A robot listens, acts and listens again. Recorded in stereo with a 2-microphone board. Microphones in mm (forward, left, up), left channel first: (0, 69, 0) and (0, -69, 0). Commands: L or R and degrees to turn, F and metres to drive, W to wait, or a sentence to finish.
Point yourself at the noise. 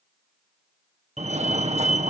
R50
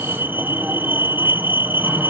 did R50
R15
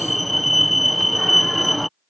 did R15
Facing the fire alarm.